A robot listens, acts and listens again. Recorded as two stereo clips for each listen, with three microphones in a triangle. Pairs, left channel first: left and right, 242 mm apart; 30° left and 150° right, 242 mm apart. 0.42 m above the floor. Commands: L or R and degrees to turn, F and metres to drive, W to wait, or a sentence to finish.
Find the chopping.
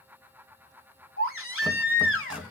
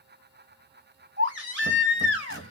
L180
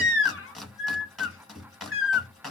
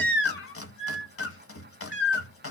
Facing the chopping.